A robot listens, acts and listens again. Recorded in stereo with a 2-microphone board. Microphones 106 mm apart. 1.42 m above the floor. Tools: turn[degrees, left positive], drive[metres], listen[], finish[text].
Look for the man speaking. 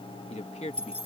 Action: turn[90]
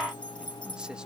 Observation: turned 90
Action: listen[]
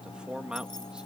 Action: finish[Facing the man speaking.]